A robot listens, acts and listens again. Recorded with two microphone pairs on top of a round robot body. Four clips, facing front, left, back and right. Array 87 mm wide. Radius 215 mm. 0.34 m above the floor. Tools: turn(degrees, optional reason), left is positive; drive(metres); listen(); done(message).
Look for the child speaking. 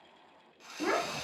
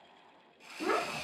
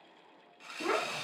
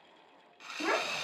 turn(degrees=-55, reason="The child speaking: 55° right.")
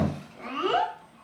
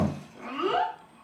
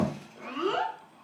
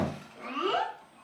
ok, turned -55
done("Facing the child speaking, 1 to 2 m away.")